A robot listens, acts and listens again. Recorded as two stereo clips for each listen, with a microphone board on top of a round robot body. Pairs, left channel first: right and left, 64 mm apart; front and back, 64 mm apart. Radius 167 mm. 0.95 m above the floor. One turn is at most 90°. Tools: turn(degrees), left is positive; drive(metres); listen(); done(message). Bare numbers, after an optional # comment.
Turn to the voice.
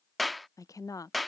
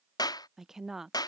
# The woman speaking: 95° right.
turn(-90)
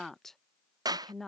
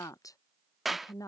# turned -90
done("Facing the woman speaking.")